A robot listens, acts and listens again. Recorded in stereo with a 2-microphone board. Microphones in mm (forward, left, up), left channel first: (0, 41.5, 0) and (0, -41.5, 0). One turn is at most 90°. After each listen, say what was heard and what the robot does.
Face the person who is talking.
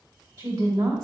The woman speaking: about 55° right or 125° right. Turn 55° right.
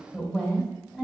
So it is at 10° right. Turn 10° right.
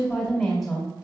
Found it: a woman speaking, straight ahead.